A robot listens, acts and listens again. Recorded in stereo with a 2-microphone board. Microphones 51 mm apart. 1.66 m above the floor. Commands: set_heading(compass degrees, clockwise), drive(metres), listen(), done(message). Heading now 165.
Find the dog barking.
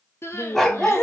set_heading(135)
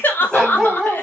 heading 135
set_heading(105)
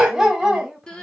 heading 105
done("Facing the dog barking.")